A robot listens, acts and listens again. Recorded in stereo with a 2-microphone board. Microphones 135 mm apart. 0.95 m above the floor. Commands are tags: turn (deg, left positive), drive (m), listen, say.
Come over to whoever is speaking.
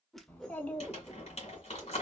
<turn deg="30"/>
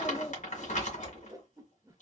<turn deg="135"/>
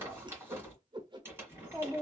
<turn deg="20"/>
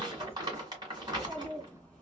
<drive m="1.0"/>
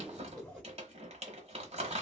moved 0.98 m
<turn deg="10"/>
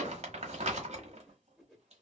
<drive m="1.0"/>
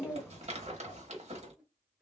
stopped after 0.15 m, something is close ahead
<turn deg="10"/>
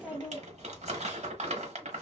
<say>Arrived at the child speaking, straight ahead.</say>